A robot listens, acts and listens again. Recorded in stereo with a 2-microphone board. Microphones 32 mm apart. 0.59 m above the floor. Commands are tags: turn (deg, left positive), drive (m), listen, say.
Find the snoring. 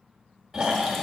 <turn deg="-30"/>
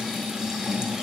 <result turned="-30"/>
<turn deg="15"/>
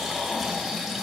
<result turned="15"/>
<say>Found it: snoring, straight ahead, 1 to 2 m away.</say>